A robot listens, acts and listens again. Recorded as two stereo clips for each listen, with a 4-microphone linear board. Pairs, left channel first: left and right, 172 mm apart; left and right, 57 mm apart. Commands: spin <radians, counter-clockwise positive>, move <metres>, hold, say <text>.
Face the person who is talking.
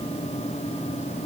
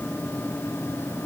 hold
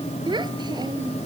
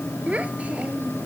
spin -0.44
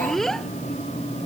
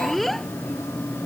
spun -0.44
say Found it: a child speaking, straight ahead.